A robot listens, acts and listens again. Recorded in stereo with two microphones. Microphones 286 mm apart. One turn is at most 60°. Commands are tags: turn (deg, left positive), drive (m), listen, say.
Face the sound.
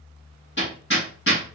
<turn deg="40"/>
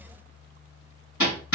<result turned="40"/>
<turn deg="60"/>
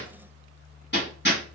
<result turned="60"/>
<turn deg="40"/>
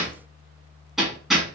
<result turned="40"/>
<say>Found it: hammering, straight ahead.</say>